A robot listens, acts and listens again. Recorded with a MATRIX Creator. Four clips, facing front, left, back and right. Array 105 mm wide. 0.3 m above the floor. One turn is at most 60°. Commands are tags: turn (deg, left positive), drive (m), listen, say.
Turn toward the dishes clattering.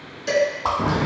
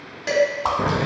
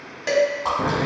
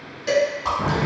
<turn deg="60"/>
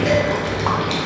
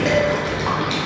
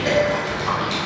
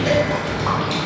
<turn deg="60"/>
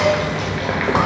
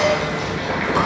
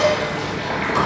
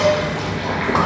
<turn deg="50"/>
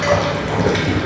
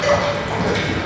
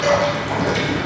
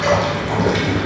<listen/>
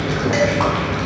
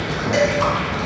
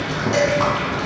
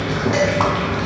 <turn deg="20"/>
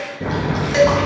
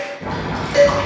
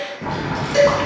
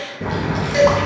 <say>Found it: dishes clattering, straight ahead.</say>